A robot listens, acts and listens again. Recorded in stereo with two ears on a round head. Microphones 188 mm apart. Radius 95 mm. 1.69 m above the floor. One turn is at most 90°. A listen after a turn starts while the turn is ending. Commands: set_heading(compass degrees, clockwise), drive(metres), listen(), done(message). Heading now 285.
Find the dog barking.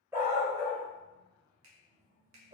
set_heading(315)
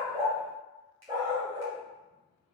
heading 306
set_heading(326)
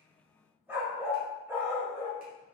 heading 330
set_heading(0)
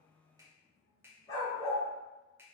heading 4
set_heading(349)
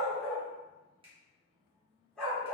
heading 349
done("Facing the dog barking, 2 to 4 m away.")